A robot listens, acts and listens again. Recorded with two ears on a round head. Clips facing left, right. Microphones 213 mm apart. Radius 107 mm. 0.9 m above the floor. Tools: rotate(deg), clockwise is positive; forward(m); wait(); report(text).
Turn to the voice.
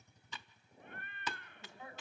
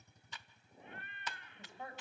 rotate(45)
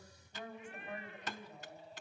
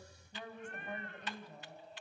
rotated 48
rotate(90)
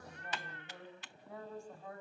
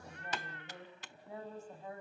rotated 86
report("Facing the woman speaking, over 4 m away.")